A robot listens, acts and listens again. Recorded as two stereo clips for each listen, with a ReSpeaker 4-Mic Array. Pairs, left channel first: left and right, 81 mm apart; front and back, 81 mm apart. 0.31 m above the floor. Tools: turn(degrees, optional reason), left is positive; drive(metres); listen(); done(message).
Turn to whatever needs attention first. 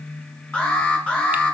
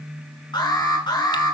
turn(degrees=20, reason="The alarm: 20° left.")
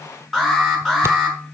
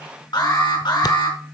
done("Facing the alarm, over 4 m away.")